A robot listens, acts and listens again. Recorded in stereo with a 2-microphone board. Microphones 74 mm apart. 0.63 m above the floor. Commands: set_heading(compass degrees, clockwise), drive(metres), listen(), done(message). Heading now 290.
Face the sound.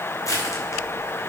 set_heading(240)
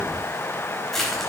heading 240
done("Found it: crushing, straight ahead, over 4 m away.")